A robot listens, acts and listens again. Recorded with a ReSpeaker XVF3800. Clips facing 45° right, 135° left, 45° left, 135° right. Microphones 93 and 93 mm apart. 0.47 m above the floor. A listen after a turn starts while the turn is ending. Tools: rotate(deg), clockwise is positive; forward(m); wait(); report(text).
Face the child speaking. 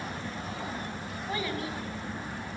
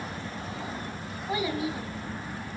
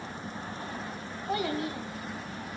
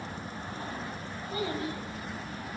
rotate(-60)
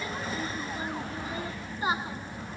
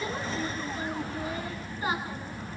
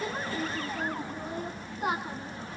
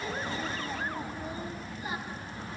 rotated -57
rotate(-25)
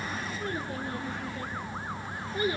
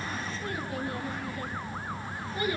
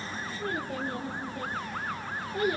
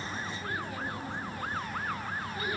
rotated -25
rotate(-10)
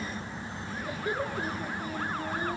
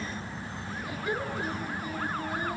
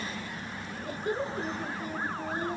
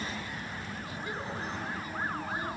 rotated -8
report("Facing the child speaking.")